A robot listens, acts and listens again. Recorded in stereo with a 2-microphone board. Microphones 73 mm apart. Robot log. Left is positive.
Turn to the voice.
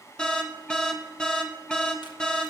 cmd idle
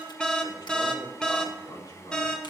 note: The man speaking: about 70° left or 110° left.
cmd yaw +70
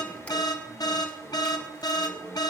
note: So it is at 35° left.
cmd yaw +35
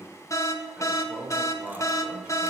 note: The man speaking is now 10° right.
cmd yaw -10
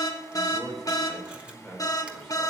end: Facing the man speaking.